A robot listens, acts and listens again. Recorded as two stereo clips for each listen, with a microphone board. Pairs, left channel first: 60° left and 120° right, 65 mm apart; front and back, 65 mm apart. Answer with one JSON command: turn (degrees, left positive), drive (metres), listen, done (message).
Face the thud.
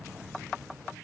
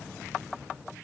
{"listen": true}
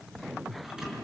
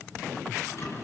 {"turn": -45}
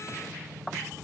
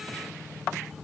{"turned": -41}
{"done": "I heard a thud from this way, but can't make it out now."}